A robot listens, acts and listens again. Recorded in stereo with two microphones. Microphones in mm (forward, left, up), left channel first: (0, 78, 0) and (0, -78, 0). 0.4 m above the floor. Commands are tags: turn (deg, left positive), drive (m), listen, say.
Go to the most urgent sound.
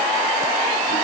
<listen/>
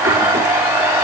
<listen/>
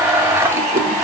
<say>I can't make out anything urgent, only a blender.</say>